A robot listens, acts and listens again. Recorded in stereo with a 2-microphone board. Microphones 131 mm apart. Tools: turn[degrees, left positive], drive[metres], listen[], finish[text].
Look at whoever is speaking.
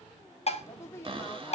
Thought: The woman speaking: about 20° left or 160° left.
Action: turn[20]
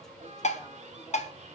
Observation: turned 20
Action: listen[]
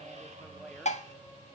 Action: listen[]
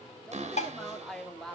Action: finish[Facing the woman speaking.]